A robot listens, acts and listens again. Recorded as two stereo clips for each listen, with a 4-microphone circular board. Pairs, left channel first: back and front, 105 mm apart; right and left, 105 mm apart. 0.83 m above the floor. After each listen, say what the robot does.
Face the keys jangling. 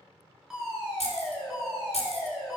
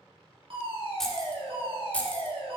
Turn 165° right.
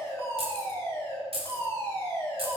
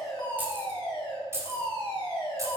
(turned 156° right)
Turn 30° left.
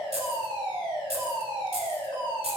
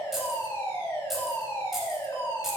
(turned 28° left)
Found it: keys jangling, straight ahead.